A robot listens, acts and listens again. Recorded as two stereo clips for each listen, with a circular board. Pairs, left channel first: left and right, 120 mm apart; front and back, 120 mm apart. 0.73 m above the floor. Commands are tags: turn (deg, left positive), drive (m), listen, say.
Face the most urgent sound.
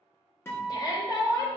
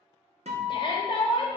<turn deg="40"/>
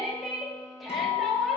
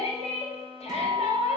<say>Facing the shout.</say>